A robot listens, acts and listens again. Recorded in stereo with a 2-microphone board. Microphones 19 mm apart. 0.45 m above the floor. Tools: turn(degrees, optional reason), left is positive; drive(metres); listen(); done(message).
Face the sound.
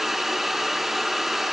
listen()
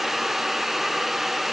listen()
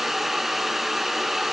done("I can't make out anything to turn to.")